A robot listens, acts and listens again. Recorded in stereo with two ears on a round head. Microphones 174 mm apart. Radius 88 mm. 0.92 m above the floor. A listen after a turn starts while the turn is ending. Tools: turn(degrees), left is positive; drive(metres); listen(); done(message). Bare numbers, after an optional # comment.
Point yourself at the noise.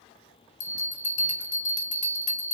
# The bell: about 40° left or 140° left.
turn(40)
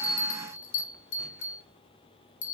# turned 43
# So it is at 95° left.
turn(95)
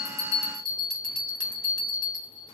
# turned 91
done("Found it: a bell, straight ahead, under 1 m away.")